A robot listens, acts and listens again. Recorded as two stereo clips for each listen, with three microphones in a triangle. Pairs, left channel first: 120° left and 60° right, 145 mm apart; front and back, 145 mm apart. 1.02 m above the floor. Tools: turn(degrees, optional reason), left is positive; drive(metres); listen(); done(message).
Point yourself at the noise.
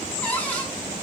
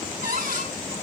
turn(degrees=-160, reason="The cupboard door: 160° right.")
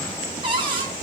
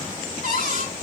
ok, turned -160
done("Found it: a cupboard door, straight ahead.")